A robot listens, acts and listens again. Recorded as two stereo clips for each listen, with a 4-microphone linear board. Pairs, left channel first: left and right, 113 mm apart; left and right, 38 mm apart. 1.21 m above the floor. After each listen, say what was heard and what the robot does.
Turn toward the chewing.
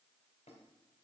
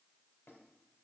Keep listening.
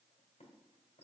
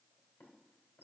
Keep listening.
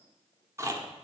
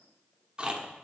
The chewing: about 25° right or 155° right. Turn 25° right.
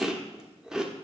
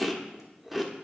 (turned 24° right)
Found it: chewing, straight ahead, 1 to 2 m away.